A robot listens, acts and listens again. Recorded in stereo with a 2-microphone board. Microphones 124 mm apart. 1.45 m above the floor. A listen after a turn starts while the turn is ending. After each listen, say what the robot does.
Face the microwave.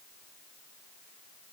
Keep listening.
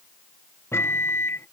Turn 20° left.
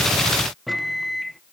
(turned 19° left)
Facing the microwave.